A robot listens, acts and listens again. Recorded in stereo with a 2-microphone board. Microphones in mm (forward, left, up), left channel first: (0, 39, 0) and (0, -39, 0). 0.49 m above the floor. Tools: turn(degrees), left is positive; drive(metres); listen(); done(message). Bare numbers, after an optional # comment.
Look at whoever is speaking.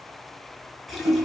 listen()
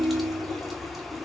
listen()
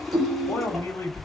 # The man speaking: about 50° left or 130° left.
turn(50)
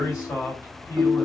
# So it is at 65° left.
turn(65)
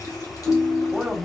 done("Found it: a man speaking, straight ahead.")